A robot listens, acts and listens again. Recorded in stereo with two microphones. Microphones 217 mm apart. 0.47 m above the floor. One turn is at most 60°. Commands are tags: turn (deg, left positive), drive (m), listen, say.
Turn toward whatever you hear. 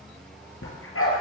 <turn deg="60"/>
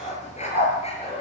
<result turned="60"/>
<turn deg="30"/>
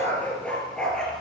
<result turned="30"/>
<say>Found it: a dog barking, straight ahead.</say>